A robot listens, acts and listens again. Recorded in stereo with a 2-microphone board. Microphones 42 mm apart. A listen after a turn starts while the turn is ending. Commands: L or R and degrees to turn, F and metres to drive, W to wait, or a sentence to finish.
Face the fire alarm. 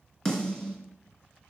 W
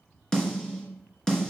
W
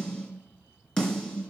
I can't make out a fire alarm, only a snare drum.